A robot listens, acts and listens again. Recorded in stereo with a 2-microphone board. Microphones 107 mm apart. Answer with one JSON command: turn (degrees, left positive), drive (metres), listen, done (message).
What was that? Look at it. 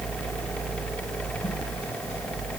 {"listen": true}
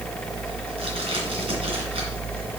{"listen": true}
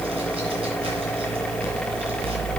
{"done": "I can't make out anything to turn to."}